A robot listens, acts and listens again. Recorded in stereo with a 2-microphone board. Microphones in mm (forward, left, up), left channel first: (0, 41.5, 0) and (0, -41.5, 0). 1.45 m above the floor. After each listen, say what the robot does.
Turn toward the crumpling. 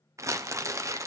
Turn 35° right.
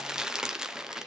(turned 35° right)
Turn 10° right.
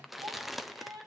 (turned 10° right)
Found it: crumpling, straight ahead.